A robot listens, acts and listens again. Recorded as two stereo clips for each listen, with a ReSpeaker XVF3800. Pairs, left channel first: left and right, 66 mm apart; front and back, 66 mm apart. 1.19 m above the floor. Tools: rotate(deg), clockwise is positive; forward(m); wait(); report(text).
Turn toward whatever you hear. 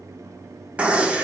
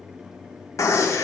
rotate(25)
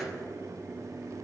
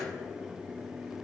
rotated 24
report("Facing where the gunshot came from. I can't hear it now.")